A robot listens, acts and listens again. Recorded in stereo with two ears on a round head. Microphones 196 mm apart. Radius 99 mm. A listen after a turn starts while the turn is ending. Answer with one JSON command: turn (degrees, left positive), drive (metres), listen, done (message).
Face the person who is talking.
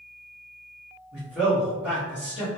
{"turn": -30}
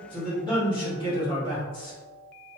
{"turn": 20}
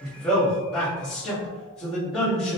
{"done": "Found it: a man speaking, straight ahead."}